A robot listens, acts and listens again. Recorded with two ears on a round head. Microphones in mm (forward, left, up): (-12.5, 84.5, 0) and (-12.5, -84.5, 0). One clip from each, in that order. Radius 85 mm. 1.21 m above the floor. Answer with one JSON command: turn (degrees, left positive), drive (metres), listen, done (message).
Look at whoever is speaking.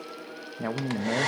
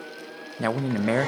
{"turn": -90}
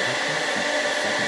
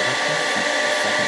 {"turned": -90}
{"listen": true}
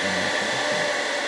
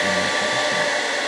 {"listen": true}
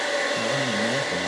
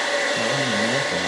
{"done": "Facing where the man speaking came from. I can't hear it now."}